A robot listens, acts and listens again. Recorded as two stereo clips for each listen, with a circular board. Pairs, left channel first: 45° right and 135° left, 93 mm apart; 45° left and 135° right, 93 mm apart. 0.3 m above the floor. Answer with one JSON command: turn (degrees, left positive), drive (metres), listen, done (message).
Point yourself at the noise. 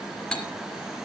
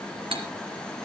{"turn": -125}
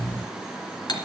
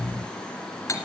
{"turn": -10}
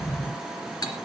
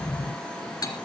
{"done": "Facing the cutlery clinking, 2 to 4 m away."}